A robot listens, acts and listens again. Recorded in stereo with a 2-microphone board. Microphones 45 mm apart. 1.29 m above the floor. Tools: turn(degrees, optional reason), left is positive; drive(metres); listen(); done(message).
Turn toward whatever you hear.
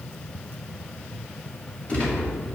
turn(degrees=25, reason="The gunshot: about 25° left or 155° left.")
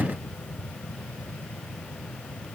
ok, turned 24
listen()
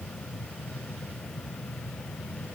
done("I heard a gunshot, but can't make it out now. It was about 5° left or 130° left.")